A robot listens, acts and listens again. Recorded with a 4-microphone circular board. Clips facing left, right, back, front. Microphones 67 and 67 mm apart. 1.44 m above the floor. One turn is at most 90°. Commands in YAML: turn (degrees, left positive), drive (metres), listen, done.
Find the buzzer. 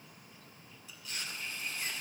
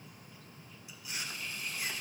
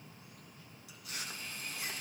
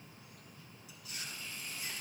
listen: true
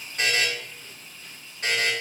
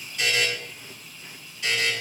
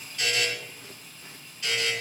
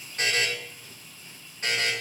turn: 50
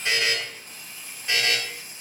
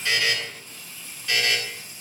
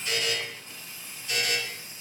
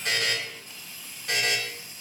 turn: 25
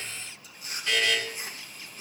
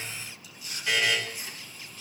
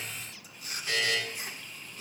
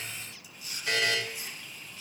turn: -10
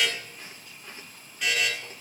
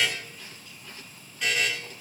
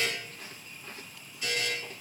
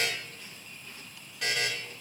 done: "Facing the buzzer."